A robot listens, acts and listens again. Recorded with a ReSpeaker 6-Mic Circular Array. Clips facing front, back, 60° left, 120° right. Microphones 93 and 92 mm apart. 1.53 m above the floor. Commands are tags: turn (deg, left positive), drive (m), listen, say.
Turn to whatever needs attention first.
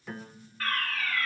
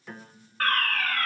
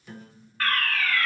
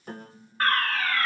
<turn deg="-170"/>
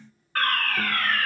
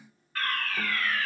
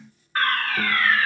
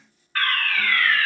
<say>Facing the fire alarm, 1 to 2 m away.</say>